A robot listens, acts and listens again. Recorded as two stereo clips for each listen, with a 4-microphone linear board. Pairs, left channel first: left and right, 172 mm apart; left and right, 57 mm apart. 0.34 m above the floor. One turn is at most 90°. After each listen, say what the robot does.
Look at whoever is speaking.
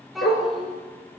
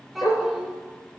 Turn 30° left.
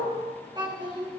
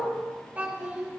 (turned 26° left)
Turn 25° right.
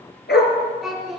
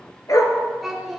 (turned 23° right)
Found it: a child speaking, straight ahead.